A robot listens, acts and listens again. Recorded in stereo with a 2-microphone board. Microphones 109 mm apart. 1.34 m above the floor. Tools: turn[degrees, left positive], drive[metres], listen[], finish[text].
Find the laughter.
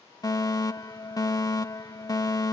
Action: listen[]
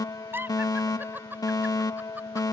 Thought: The laughter: about 15° right or 165° right.
Action: turn[-15]
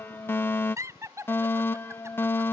Thought: The laughter: about 25° right or 155° right.
Action: turn[-25]
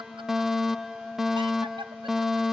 Action: listen[]
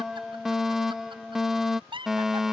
Thought: So it is at 130° right.
Action: turn[-130]
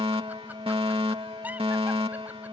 Action: listen[]
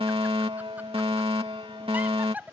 Thought: The laughter is now 15° right.
Action: turn[-15]
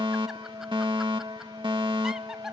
Action: listen[]
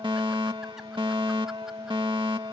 Action: listen[]
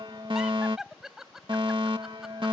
Action: finish[Found it: laughter, straight ahead.]